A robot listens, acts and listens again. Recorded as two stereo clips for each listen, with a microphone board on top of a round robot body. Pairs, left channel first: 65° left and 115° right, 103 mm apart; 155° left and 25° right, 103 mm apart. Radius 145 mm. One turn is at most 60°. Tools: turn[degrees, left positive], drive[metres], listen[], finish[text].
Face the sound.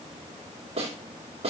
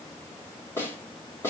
Thought: The snare drum: 135° right.
Action: turn[-60]
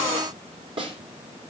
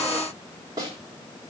Thought: The snare drum is now 75° right.
Action: turn[-60]
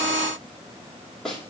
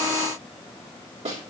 Thought: The snare drum is now 20° right.
Action: turn[-20]
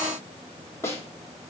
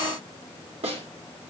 Action: finish[Facing the snare drum, 2 to 4 m away.]